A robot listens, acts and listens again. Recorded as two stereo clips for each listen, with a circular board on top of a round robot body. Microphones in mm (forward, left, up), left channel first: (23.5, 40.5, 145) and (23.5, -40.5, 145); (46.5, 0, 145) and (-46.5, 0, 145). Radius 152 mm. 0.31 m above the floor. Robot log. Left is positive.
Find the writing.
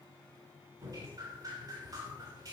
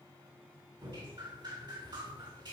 cmd idle
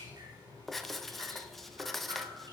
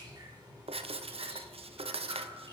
note: The writing: 175° left.
cmd yaw +175
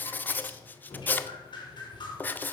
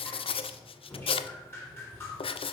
note: The writing is now 20° left.
cmd yaw +20
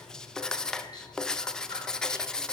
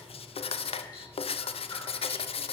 end: Found it: writing, straight ahead.